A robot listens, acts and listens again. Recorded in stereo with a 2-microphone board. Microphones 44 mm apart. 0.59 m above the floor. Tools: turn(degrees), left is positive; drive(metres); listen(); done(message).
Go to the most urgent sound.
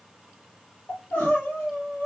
turn(degrees=55)
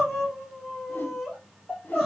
drive(metres=1.0)
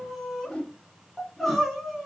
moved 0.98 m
drive(metres=1.0)
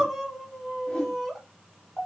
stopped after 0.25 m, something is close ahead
done("I am next to the crying.")